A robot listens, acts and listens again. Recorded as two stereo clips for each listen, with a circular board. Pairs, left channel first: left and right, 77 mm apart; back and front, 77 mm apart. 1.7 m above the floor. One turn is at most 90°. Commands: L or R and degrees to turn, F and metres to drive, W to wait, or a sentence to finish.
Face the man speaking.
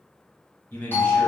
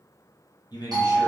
L90
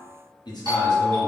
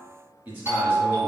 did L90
L65
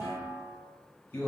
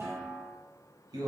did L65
L30
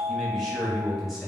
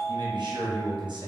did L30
Facing the man speaking, 1 to 2 m away.